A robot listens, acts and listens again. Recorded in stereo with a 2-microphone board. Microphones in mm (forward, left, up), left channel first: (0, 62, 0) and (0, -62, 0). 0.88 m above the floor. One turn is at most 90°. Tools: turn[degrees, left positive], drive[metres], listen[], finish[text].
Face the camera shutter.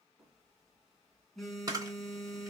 Thought: The camera shutter: about 30° right or 150° right.
Action: turn[-30]
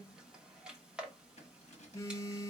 Action: finish[Facing the camera shutter.]